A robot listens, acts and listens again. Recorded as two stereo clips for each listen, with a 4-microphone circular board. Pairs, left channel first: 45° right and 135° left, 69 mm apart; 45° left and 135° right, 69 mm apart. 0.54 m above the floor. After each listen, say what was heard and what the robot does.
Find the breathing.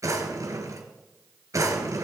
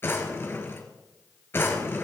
Keep listening.
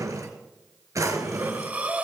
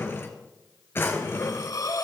The breathing: 70° left. Turn 70° left.
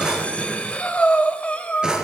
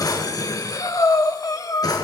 The breathing is now 25° left. Turn 25° left.
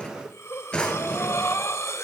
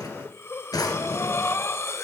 Facing the breathing, 1 to 2 m away.